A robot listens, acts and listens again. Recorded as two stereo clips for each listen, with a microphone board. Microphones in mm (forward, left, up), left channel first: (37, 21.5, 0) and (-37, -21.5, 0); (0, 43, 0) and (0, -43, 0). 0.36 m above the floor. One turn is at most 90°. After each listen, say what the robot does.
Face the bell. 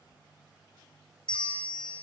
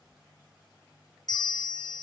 Turn 50° left.
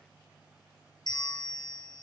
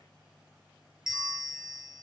Found it: a bell, straight ahead.